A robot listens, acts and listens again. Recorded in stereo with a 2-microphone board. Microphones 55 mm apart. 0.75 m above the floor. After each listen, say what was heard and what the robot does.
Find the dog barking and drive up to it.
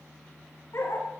The dog barking: about 60° left or 120° left. Turn 60° left.
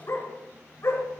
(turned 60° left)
So it is at 60° left. Turn 60° left.
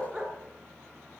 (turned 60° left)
The dog barking is now 15° right. Turn 15° right.
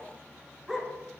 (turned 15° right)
Drive 1.0 m forward.
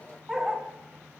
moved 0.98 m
The dog barking is now 10° right. Turn 10° right.
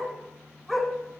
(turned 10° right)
Drive 1.0 m forward.
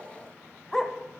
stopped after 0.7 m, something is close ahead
I am next to the dog barking.